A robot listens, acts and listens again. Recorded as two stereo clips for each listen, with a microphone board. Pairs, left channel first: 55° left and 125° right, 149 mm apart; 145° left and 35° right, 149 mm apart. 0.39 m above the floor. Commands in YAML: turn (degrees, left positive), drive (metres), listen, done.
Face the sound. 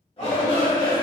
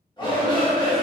turn: 95
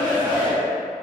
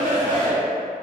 turn: -30
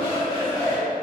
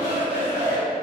done: "Facing the shout, 1 to 2 m away."